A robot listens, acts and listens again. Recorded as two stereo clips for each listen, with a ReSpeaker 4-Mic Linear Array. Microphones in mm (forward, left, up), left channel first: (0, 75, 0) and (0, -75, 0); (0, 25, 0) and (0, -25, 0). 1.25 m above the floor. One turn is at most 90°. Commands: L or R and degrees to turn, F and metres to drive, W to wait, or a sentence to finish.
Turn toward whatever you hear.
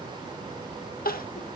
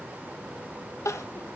L90
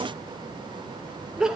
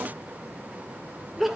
Facing the crying, under 1 m away.